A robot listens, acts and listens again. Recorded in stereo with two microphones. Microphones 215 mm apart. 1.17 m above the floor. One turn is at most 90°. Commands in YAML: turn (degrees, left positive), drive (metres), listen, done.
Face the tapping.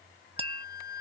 turn: -25
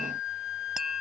listen: true
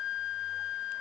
listen: true
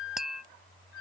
done: "Found it: tapping, straight ahead."